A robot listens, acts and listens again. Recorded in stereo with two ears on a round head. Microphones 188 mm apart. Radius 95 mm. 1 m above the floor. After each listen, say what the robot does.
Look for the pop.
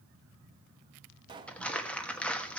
Turn 25° right.
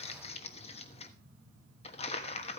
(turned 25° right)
Keep listening.
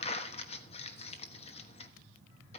I heard a pop, but can't make it out now. It was about straight ahead or 130° right.